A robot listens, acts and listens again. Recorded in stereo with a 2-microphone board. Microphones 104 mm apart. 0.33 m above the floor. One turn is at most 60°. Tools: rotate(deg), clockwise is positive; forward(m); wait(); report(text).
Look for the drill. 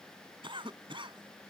wait()
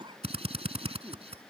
rotate(60)
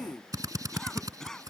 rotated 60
rotate(35)
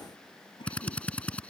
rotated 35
rotate(-15)
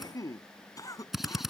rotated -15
report("Facing the drill.")